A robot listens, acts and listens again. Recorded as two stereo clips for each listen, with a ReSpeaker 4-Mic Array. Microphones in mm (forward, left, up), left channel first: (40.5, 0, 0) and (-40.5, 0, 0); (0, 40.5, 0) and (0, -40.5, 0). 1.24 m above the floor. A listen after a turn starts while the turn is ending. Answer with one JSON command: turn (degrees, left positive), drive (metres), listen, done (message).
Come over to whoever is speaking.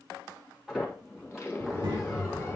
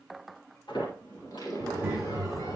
{"turn": -160}
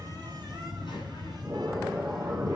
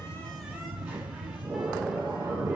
{"turn": -20}
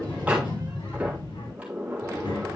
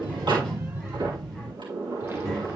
{"drive": 1.0}
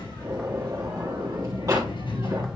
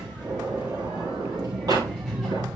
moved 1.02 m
{"drive": 1.0}
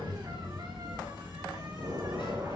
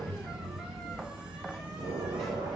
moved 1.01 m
{"drive": 1.0}
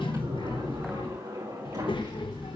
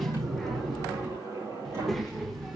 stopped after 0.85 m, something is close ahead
{"done": "Arrived at the child speaking, straight ahead."}